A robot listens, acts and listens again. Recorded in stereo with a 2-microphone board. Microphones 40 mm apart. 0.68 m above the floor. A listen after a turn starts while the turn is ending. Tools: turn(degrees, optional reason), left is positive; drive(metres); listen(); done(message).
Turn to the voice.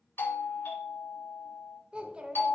turn(degrees=-25, reason="The child speaking: about 25° right or 155° right.")
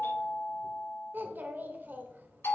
turn(degrees=-130, reason="So it is at 130° right.")
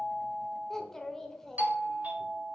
turn(degrees=10, reason="The child speaking is now 10° left.")
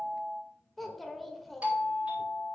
done("Facing the child speaking, 1 to 2 m away.")